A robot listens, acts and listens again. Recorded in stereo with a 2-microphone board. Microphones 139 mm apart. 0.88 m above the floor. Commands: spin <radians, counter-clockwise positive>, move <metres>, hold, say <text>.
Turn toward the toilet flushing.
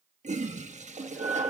spin -1.05
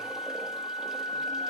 hold
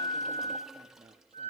hold
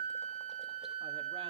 say I heard a toilet flushing, but can't make it out now. It was about straight ahead or 60° right.